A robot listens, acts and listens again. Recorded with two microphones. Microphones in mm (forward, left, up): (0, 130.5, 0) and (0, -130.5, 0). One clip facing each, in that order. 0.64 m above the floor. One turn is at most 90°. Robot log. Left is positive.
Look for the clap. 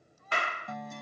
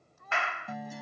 note: The clap: about 40° left or 140° left.
cmd yaw +40
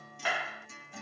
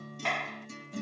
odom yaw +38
end: Found it: a clap, straight ahead.